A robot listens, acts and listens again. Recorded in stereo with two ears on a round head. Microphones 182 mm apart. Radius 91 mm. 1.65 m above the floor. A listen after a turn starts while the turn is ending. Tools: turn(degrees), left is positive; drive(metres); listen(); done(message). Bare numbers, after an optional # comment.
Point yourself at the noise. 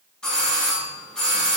turn(30)
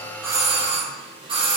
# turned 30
# So it is at 25° right.
turn(-25)
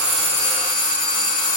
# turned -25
# The doorbell is now 20° left.
turn(20)
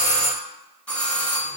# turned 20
done("Facing the doorbell, under 1 m away.")